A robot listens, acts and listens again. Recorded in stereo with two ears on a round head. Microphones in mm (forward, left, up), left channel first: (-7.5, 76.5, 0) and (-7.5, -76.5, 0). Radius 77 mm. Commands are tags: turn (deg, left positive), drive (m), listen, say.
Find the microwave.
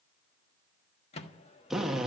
<turn deg="40"/>
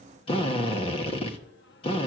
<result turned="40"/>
<listen/>
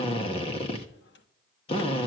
<listen/>
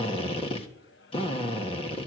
<say>I heard a microwave, but can't make it out now. It was about straight ahead or 100° left.</say>